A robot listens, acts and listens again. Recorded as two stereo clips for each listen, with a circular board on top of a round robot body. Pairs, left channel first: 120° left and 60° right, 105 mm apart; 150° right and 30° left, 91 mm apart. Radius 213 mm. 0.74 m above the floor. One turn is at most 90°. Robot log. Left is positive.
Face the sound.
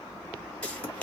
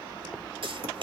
note: The pop: 40° left.
cmd yaw +40
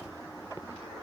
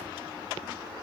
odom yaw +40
end: Facing where the pop came from. I can't hear it now.